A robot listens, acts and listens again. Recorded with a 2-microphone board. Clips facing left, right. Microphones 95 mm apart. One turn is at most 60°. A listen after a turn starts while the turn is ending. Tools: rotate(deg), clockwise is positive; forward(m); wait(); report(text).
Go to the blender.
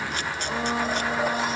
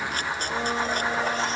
rotate(-30)
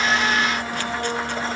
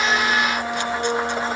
rotate(20)
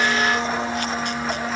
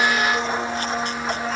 forward(1.0)
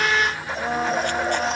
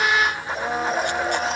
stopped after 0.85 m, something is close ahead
report("Arrived at the blender, straight ahead.")